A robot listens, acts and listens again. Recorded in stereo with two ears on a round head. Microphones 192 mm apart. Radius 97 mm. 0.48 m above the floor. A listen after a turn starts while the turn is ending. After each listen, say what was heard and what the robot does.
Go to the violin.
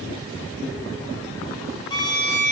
The violin: about 20° left or 160° left. Turn 20° left.
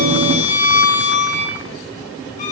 So it is at 140° left. Turn 140° left.
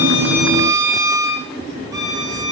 The violin is now 15° right. Turn 15° right.
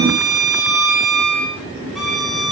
Drive 1.0 m forward.
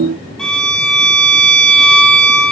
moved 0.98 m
Drive 1.0 m forward.
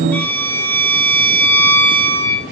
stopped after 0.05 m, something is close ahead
The violin is now 10° left. Turn 10° left.
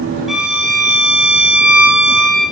I am next to the violin.